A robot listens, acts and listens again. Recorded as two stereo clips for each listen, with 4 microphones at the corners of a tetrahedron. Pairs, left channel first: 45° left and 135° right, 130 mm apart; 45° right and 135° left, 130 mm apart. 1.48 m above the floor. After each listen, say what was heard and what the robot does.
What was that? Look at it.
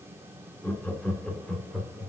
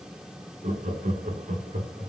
The laughter: 135° left. Turn 135° left.
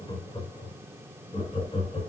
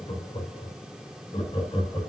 Facing the laughter.